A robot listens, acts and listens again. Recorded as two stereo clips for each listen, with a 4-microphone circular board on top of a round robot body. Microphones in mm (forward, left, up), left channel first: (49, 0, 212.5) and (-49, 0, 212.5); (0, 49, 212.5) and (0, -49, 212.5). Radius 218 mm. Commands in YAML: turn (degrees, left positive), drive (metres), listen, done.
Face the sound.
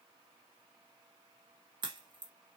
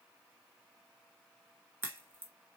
turn: -155
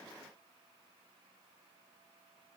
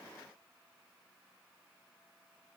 done: "Facing where the crack came from. I can't hear it now."